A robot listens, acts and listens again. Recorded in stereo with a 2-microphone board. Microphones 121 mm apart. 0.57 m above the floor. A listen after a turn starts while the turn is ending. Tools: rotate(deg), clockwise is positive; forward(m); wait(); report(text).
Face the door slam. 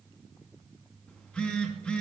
wait()
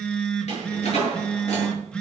rotate(-60)
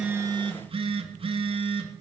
wait()
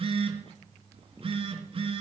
report("I heard a door slam, but can't make it out now. It was about straight ahead or 60° left.")